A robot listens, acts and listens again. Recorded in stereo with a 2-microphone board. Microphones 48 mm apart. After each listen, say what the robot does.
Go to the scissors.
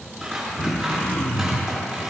Turn 30° right.
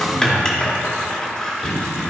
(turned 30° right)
Turn 15° left.
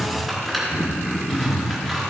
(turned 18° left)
Drive 1.0 m forward.
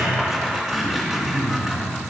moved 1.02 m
Drive 1.0 m forward.
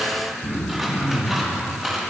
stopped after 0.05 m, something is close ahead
Turn 10° right.
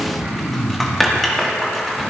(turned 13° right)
I am next to the scissors.